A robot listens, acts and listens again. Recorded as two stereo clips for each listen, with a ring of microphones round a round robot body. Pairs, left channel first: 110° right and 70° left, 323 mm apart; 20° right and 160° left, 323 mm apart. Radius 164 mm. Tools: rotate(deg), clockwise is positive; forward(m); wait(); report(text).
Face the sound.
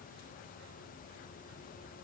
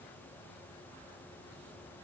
wait()
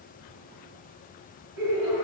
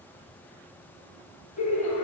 rotate(-45)
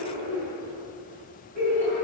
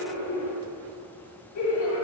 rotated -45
report("Found it: laughter, straight ahead, 2 to 4 m away.")